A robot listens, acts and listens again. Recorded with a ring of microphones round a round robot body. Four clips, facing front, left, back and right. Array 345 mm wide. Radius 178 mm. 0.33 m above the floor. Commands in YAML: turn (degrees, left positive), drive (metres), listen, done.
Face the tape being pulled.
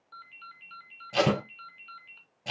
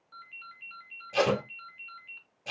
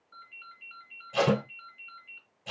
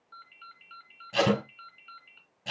turn: -15
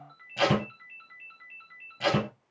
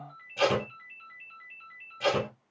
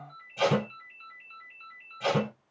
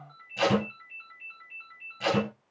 done: "Facing the tape being pulled, 2 to 4 m away."